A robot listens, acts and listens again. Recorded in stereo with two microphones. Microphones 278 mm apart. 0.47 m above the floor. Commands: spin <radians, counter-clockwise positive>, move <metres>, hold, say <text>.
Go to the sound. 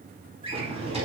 spin -0.35
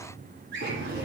spin -2.44
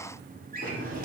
spin -0.61
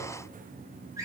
spin -0.17
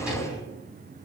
move 1.0
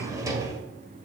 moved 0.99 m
spin -0.26
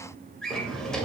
move 1.0
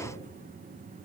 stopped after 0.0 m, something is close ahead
hold
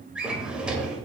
say I am next to the drawer.